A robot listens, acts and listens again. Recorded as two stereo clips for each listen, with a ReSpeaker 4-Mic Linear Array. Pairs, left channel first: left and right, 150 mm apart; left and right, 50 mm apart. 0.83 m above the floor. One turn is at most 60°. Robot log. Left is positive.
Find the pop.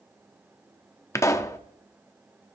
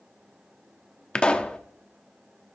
note: The pop: about 20° left or 160° left.
cmd yaw +20
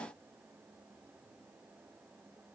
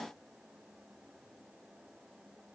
cmd idle
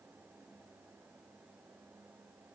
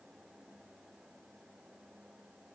end: I heard a pop, but can't make it out now. It was about straight ahead or 140° left.